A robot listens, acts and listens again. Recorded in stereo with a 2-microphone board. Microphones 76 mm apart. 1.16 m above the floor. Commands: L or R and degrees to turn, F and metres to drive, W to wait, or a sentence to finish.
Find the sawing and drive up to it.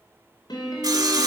R55
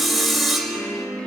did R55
F1.0
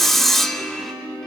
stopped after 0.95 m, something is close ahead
Arrived at the sawing, straight ahead.